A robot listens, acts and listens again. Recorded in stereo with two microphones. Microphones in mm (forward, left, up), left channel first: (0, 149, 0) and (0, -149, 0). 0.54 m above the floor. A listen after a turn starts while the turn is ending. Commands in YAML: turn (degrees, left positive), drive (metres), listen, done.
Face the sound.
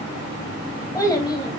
turn: 15
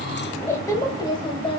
turn: 20
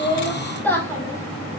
turn: 30
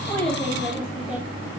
listen: true
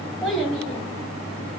turn: 30
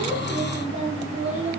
turn: -25
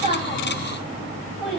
listen: true
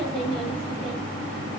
listen: true
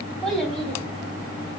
done: "Facing the child speaking, 2 to 4 m away."